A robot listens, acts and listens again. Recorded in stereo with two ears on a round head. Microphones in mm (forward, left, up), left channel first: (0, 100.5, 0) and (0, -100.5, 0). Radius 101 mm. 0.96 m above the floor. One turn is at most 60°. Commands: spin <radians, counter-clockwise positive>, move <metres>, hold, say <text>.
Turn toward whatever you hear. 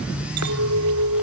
spin -1.05
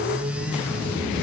spin -0.52
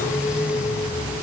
hold
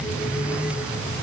say Facing where the clink came from. I can't hear it now.